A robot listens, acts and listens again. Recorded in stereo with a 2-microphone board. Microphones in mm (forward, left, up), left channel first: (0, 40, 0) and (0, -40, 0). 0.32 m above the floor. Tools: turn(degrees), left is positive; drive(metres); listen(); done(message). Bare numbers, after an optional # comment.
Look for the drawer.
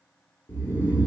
listen()
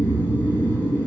listen()
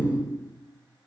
done("I can't make out a drawer, only snoring.")